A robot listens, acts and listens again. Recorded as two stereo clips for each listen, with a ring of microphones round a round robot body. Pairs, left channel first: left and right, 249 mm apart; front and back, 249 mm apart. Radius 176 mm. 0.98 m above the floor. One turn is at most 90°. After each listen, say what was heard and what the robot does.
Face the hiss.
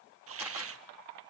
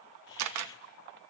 The hiss: 60° right. Turn 60° right.
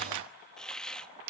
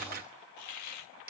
Facing the hiss.